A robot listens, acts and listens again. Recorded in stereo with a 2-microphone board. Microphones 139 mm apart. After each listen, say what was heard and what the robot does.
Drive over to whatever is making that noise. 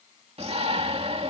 The shout: about 45° right or 135° right. Turn 45° right.
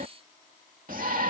So it is at 85° right. Turn 85° right.
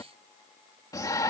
The shout is now 25° left. Turn 25° left.
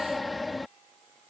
Drive 1.0 m forward.
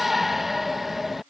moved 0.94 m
Drive 1.0 m forward.
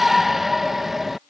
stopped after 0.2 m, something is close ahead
Arrived at the shout, straight ahead.